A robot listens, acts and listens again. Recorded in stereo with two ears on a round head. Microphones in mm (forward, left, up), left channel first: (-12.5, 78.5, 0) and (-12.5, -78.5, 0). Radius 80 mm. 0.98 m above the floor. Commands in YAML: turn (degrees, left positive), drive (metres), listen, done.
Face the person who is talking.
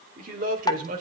turn: -50
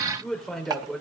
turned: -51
done: "Found it: a man speaking, straight ahead, over 4 m away."